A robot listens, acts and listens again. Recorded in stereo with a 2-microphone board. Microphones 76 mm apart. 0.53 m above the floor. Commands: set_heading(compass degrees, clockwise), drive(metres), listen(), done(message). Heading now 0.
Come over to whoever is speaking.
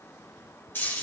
listen()
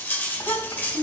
set_heading(290)
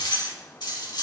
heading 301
listen()
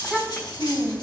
set_heading(281)
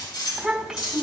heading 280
drive(1.0)
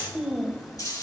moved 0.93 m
drive(1.0)
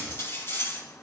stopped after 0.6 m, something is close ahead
listen()
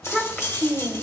set_heading(265)
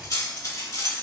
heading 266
listen()
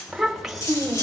done("I am next to the child speaking.")